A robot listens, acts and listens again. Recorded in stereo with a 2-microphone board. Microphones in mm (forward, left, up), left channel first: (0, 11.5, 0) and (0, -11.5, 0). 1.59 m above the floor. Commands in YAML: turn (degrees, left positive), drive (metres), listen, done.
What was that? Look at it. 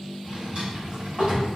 turn: -40
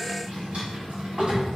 turn: -90
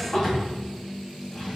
turn: 20
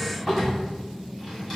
done: "Facing the drawer."